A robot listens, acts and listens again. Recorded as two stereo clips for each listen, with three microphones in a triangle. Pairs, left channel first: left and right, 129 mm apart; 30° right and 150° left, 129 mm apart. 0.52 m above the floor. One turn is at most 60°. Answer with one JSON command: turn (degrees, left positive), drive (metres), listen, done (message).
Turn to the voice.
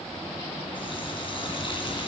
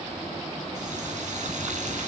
{"listen": true}
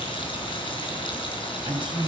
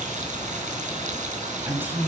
{"turn": -60}
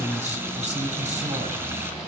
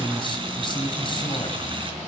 {"turn": -60}
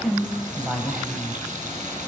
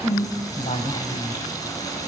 {"done": "Facing the woman speaking, 2 to 4 m away."}